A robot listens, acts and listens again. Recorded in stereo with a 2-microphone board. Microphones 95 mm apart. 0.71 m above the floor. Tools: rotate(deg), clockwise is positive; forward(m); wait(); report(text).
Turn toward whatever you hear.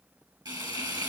rotate(45)
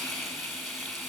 report("Found it: frying, straight ahead.")